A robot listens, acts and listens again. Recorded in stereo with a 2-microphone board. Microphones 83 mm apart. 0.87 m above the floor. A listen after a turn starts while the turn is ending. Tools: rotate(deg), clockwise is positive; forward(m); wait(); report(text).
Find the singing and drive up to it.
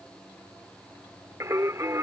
rotate(40)
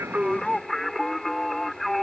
forward(1.0)
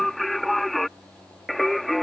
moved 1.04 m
forward(1.0)
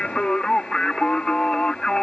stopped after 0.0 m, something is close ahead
rotate(-10)
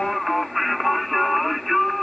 report("I am next to the singing.")